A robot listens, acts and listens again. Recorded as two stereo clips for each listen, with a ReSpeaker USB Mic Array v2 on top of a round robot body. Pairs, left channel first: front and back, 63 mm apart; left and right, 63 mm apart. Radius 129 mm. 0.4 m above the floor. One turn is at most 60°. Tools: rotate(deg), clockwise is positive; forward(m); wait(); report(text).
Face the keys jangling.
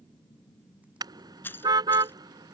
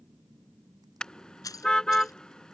rotate(-60)
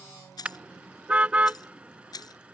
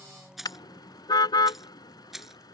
report("Found it: keys jangling, straight ahead.")